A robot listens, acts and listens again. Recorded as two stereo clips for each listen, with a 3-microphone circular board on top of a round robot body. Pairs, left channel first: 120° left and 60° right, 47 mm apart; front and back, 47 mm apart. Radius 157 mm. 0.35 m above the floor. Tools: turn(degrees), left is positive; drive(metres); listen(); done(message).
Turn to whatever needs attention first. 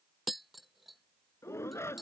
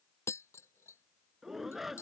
turn(degrees=95)
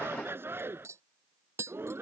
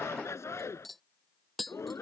turn(degrees=-20)
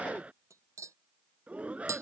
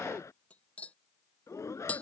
done("Facing the shout.")